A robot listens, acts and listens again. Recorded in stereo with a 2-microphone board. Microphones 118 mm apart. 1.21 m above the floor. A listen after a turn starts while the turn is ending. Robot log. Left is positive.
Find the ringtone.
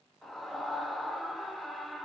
cmd idle
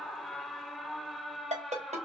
cmd yaw -90
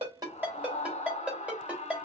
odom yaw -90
note: So it is at 10° right.
cmd yaw -10
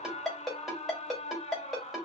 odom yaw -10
end: Facing the ringtone, 2 to 4 m away.